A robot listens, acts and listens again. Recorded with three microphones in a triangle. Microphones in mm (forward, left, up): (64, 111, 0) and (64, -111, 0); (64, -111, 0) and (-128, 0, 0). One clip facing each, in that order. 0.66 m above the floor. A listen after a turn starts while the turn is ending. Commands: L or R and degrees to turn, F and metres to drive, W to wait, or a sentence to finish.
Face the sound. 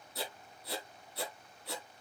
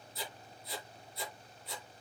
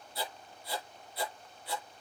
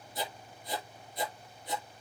L80
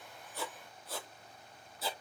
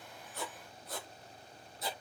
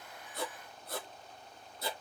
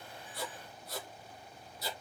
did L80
Found it: writing, straight ahead.